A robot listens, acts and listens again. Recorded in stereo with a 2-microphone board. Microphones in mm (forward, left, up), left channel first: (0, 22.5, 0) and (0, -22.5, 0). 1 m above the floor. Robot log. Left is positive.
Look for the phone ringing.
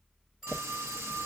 cmd yaw -30
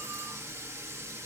cmd idle
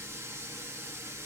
cmd idle
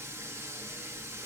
end: I heard a phone ringing, but can't make it out now. It was about 20° left or 140° right.